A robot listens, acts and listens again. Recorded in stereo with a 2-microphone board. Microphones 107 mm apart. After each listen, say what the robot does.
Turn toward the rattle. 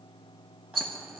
Turn 50° right.
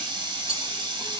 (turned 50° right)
Turn 80° right.
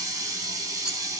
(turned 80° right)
Keep listening.
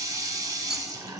Keep listening.
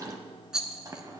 Found it: a rattle, straight ahead, 1 to 2 m away.